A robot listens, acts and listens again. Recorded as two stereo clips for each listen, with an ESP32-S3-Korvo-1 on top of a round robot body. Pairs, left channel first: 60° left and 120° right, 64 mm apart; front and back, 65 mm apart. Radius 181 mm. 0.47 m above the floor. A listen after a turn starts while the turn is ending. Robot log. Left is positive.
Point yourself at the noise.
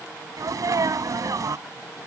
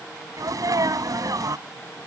note: The sneeze: 150° right.
cmd yaw -150
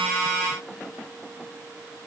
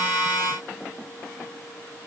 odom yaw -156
end: Facing where the sneeze came from. I can't hear it now.